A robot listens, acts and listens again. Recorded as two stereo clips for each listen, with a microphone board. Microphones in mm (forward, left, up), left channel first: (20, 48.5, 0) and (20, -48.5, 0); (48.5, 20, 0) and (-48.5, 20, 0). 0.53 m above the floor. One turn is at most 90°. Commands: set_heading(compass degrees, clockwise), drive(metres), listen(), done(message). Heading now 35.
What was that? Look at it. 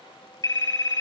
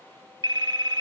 set_heading(305)
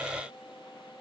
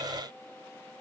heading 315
set_heading(255)
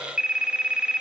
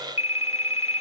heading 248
set_heading(258)
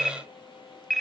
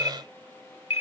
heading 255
done("Facing the phone ringing.")